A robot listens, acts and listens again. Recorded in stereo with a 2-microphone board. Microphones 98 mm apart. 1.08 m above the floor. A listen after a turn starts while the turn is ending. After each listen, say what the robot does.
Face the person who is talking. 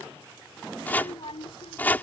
Turn 90° left.
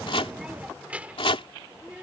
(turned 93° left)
Turn 15° right.
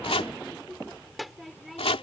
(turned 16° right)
Found it: a child speaking, straight ahead.